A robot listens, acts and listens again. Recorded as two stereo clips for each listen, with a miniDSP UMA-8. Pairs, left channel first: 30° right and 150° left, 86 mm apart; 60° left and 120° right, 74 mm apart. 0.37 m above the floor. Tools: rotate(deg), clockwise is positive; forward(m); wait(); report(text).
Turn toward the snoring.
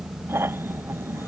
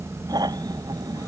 rotate(145)
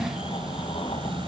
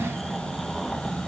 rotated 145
wait()
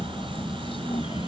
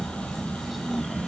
rotate(30)
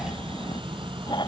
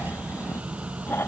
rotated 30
report("Found it: snoring, straight ahead.")